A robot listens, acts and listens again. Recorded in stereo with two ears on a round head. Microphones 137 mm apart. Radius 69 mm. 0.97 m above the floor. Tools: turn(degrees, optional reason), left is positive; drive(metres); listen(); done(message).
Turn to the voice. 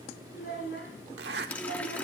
turn(degrees=75, reason="The child speaking: about 75° left or 105° left.")
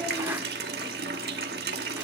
listen()
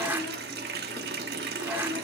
listen()
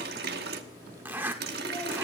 done("I heard a child speaking, but can't make it out now. It was about straight ahead or 30° left.")